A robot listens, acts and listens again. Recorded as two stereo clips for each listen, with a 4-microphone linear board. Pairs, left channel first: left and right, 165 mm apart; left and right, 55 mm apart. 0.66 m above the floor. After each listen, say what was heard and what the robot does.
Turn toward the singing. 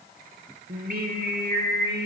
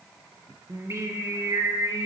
Turn 90° right.
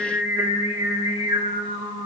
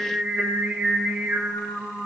So it is at 35° right. Turn 35° right.
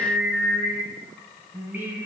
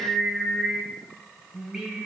The singing is now 15° right. Turn 15° right.
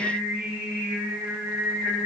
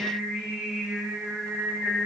The singing is now 10° right. Turn 10° right.
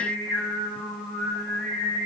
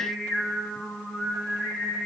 Found it: singing, straight ahead.